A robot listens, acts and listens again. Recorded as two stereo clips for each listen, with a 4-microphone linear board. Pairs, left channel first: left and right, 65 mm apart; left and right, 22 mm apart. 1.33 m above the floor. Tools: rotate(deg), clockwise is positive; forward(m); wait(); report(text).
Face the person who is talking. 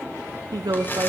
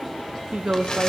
rotate(90)
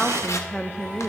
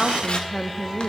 rotate(-10)
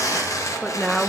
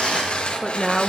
report("Found it: a woman speaking, straight ahead.")